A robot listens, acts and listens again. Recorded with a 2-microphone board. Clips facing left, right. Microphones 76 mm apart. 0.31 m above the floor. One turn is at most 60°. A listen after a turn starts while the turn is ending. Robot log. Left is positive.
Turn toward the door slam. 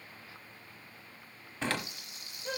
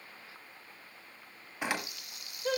cmd yaw -30
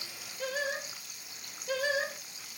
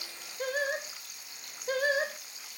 cmd idle
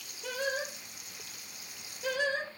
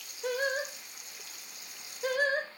end: I heard a door slam, but can't make it out now. It was about 15° left or 135° right.